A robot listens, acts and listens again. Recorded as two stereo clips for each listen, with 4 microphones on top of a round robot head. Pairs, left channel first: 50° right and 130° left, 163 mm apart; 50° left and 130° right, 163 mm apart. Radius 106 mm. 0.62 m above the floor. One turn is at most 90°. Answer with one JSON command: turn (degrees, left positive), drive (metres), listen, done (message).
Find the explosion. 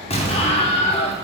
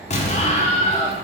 {"done": "Found it: an explosion, straight ahead, 1 to 2 m away."}